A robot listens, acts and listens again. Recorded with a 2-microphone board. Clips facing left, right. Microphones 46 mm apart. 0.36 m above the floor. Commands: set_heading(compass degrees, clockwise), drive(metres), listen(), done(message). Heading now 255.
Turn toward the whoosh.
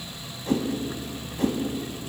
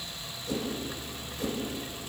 set_heading(205)
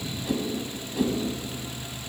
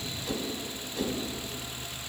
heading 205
set_heading(195)
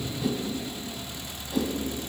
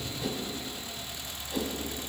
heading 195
done("Facing the whoosh, 1 to 2 m away.")